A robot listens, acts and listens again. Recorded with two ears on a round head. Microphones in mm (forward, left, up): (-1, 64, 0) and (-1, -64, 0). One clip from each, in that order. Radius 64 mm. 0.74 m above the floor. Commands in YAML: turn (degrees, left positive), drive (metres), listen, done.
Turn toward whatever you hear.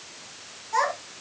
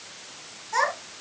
turn: -30
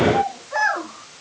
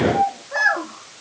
turn: 20
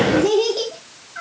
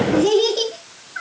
turn: -10
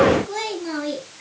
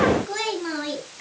done: "Found it: a child speaking, straight ahead, 2 to 4 m away."